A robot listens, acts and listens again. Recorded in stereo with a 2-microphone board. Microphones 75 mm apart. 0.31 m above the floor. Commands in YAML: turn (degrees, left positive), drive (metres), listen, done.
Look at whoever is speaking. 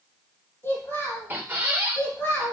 turn: 35
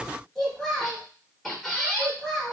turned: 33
done: "Facing the child speaking, 1 to 2 m away."